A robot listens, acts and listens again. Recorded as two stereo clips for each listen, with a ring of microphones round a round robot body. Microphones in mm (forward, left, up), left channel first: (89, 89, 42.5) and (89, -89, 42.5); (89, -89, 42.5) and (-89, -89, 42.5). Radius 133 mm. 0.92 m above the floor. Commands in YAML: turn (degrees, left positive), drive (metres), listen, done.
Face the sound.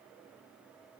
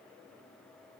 listen: true
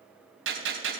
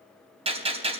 turn: -125
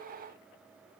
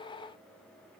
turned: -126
done: "I heard a gunshot from this way, but can't make it out now."